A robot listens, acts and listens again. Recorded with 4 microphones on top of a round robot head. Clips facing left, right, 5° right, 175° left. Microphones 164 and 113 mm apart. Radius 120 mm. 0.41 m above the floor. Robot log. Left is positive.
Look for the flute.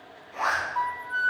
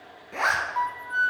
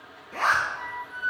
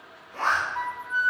note: The flute: 175° right.
cmd yaw -175
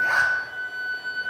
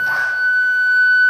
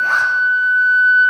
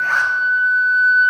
note: The flute is now 70° right.
cmd yaw -70
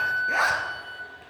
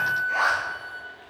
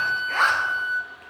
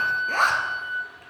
note: The flute is now 10° right.
cmd yaw -10
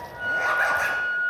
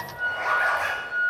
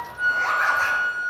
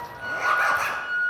end: Facing the flute.